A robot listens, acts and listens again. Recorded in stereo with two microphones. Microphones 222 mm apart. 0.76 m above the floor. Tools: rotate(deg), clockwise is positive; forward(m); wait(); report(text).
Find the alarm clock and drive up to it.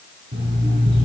rotate(60)
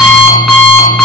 forward(1.0)
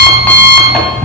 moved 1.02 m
forward(1.0)
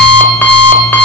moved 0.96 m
rotate(-10)
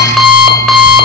forward(1.0)
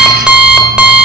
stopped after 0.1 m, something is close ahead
report("Arrived at the alarm clock, straight ahead.")